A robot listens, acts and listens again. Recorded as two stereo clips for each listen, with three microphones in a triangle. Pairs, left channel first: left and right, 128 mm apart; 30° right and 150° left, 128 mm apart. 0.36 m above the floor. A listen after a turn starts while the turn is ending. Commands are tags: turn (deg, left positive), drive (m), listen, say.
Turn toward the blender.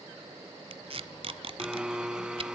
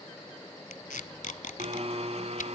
<turn deg="-175"/>
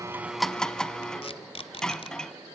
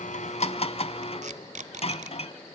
<say>Facing the blender.</say>